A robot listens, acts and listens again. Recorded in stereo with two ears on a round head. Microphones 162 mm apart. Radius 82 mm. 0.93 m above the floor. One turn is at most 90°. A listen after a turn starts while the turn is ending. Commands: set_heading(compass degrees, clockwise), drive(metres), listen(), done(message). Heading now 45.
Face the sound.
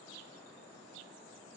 listen()
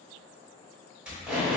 set_heading(75)
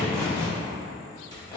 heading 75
set_heading(50)
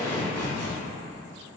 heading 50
set_heading(40)
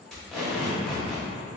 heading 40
done("Found it: tape being pulled, straight ahead, 1 to 2 m away.")